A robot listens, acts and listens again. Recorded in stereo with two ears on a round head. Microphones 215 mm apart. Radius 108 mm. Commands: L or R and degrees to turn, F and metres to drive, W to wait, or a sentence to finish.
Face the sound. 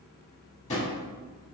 L30
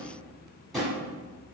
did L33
Found it: a drawer, straight ahead.